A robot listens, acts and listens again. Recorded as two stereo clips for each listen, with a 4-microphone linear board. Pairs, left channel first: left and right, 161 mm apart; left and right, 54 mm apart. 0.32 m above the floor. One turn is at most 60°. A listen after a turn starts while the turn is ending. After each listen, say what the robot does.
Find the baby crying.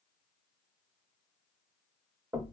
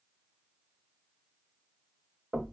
Keep listening.
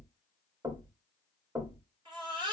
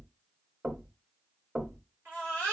Turn 30° right.
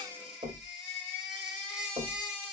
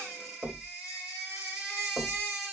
Facing the baby crying.